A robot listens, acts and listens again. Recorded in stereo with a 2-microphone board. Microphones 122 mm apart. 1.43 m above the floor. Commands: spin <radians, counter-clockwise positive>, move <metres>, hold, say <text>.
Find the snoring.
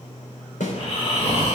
spin 0.87
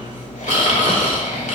spin 1.40
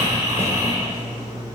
spin -0.44
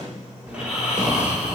spin -0.17
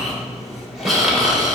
say Facing the snoring, 2 to 4 m away.